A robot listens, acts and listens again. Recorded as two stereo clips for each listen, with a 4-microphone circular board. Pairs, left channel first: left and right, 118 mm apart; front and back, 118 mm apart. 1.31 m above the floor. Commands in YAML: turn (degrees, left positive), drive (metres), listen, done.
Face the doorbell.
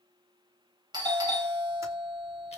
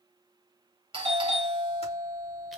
turn: -140
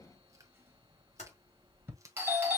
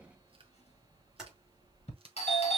turn: -20
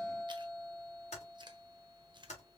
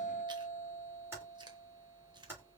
done: "Found it: a doorbell, straight ahead."